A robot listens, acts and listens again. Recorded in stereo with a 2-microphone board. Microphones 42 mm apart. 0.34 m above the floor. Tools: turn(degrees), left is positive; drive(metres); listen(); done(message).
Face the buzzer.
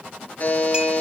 turn(degrees=40)
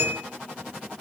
listen()
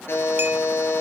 turn(degrees=100)
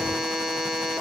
turn(degrees=-10)
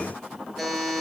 done("Facing the buzzer, 2 to 4 m away.")